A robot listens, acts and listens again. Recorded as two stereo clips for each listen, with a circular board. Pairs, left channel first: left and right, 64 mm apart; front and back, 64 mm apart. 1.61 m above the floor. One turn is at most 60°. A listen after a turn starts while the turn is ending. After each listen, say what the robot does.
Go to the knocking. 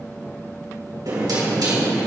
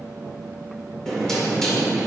Turn 60° right.
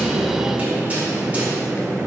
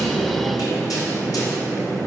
Turn 20° right.
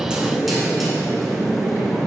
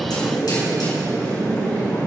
Drive 1.0 m forward.
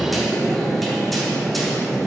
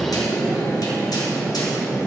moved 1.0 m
Drive 1.0 m forward.
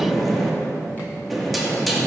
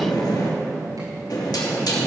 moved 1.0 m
Drive 1.0 m forward.
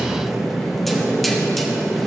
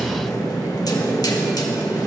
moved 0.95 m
Drive 1.0 m forward.
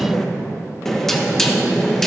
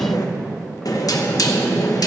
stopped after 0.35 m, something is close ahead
Turn 10° left.
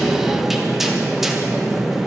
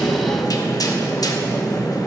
Arrived at the knocking, straight ahead.